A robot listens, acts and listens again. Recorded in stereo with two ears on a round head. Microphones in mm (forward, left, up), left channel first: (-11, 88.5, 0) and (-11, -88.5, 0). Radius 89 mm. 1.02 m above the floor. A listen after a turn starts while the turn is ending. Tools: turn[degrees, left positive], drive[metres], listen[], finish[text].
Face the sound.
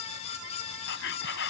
Thought: The whispering: about 70° left or 110° left.
Action: turn[70]
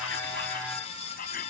Thought: So it is at 45° left.
Action: turn[45]
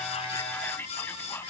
Thought: The whispering is now 10° left.
Action: turn[10]
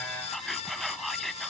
Action: finish[Found it: whispering, straight ahead.]